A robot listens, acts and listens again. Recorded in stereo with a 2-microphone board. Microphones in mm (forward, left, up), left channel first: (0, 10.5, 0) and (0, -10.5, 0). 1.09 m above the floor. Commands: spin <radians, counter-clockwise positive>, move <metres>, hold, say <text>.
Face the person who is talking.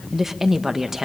spin -0.52
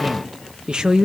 spin -2.36
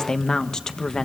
spin 0.61
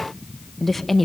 say Facing the woman speaking, 1 to 2 m away.